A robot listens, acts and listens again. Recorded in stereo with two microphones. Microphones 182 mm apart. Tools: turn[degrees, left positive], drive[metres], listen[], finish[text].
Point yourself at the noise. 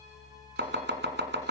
Action: turn[-90]
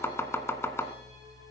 Thought: So it is at 15° left.
Action: turn[15]
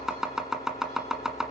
Action: finish[Found it: chopping, straight ahead, 1 to 2 m away.]